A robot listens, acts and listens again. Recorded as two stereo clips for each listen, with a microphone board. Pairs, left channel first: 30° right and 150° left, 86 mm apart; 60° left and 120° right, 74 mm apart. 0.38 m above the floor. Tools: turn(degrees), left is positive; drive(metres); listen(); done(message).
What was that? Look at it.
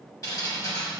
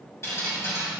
turn(degrees=15)
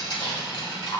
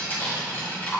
done("Found it: dripping, straight ahead, 1 to 2 m away.")